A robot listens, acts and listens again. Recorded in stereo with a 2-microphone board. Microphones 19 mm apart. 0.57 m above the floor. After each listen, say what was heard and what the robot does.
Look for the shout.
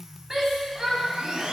The shout: about 25° right or 155° right. Turn 25° right.
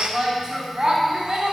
So it is at 130° right. Turn 130° right.
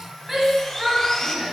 The shout is now 10° right. Turn 10° right.
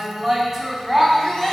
Found it: a shout, straight ahead, 2 to 4 m away.